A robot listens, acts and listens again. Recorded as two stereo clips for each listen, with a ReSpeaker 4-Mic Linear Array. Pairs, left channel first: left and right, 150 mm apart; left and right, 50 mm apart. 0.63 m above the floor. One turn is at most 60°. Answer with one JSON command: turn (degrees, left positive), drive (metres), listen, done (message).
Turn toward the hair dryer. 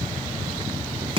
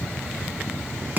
{"listen": true}
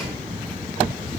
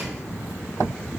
{"listen": true}
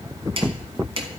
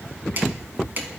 {"done": "I can't make out a hair dryer, only chopping."}